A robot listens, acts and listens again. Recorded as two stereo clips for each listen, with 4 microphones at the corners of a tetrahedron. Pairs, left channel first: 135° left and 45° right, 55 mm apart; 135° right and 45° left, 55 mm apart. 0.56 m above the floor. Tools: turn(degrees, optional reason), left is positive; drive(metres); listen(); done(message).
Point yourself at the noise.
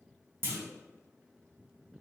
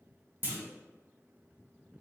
done("Facing the clunk, under 1 m away.")